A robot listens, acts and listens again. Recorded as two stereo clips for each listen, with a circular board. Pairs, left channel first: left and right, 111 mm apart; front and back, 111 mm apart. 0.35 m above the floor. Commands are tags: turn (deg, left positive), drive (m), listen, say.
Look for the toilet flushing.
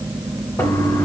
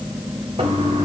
<turn deg="150"/>
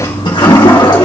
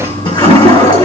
<turn deg="40"/>
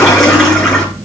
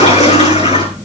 <say>Found it: a toilet flushing, straight ahead.</say>